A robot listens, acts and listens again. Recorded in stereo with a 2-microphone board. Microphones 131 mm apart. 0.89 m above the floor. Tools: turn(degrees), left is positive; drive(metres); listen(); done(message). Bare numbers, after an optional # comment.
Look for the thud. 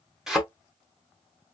turn(-30)
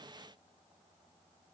listen()
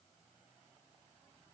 done("I heard a thud, but can't make it out now. It was about 25° left or 145° right.")